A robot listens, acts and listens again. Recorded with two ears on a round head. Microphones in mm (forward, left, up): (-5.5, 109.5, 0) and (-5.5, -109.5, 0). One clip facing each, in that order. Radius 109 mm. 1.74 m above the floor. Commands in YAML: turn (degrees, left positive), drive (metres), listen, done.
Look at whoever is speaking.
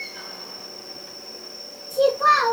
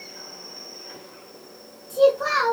turn: -30
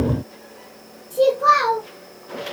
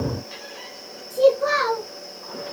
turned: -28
done: "Facing the child speaking, 1 to 2 m away."